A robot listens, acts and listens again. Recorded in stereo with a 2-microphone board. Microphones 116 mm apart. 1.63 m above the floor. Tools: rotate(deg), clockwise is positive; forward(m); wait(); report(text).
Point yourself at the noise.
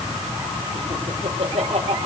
rotate(65)
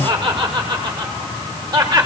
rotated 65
rotate(40)
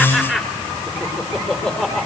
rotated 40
report("Found it: laughter, straight ahead, over 4 m away.")